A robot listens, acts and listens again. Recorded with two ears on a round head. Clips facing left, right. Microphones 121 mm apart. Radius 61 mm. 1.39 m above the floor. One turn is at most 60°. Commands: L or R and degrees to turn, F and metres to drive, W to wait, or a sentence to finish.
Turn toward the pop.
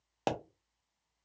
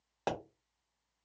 L25
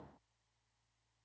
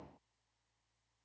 W
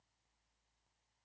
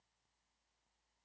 I heard a pop, but can't make it out now. It was about straight ahead or 130° left.